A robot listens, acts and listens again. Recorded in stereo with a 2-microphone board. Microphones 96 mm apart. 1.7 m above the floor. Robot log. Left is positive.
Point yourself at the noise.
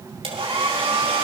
cmd yaw -90
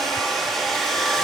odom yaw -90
end: Found it: a hair dryer, straight ahead, over 4 m away.